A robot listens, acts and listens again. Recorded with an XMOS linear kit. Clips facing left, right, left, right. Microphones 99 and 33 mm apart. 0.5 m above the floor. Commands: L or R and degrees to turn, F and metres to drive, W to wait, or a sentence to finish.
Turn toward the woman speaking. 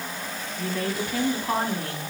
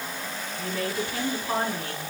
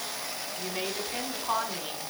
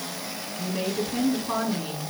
L60
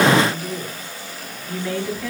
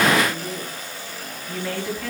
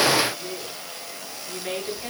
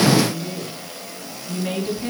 Found it: a woman speaking, straight ahead, over 4 m away.